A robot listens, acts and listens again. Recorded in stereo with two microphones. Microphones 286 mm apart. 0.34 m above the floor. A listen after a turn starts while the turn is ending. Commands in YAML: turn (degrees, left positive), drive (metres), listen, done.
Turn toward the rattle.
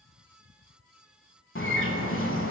listen: true
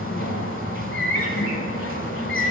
listen: true
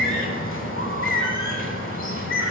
done: "I can't make out a rattle, only a bird."